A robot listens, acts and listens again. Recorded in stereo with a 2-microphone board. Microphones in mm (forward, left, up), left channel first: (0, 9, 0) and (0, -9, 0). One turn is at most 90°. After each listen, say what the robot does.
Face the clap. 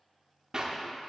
Turn 40° right.
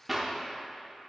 Turn 15° right.
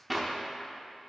Found it: a clap, straight ahead, under 1 m away.